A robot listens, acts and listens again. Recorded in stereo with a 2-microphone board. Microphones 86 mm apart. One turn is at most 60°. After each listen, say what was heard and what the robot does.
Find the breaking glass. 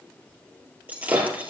The breaking glass: about 20° right or 160° right. Turn 20° right.
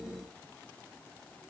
Keep listening.
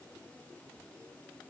I heard breaking glass, but can't make it out now. It was about straight ahead or 140° right.